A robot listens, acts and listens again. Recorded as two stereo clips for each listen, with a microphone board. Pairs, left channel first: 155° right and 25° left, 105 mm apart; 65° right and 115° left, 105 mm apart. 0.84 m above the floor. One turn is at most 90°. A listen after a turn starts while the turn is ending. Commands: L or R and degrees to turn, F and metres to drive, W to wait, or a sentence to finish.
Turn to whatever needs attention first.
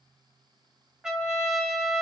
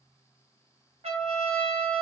W
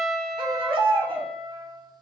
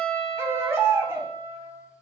L50
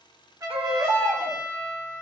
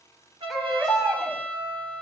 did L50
L20
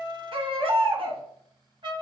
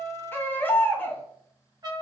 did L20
Facing the baby crying.